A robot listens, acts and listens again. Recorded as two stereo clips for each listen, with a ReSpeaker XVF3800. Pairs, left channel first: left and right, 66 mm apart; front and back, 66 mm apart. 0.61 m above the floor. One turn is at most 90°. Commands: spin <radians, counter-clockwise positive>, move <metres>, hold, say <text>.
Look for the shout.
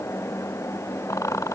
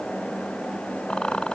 hold
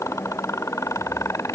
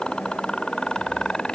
hold
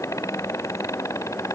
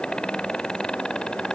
say I can't make out a shout to turn to.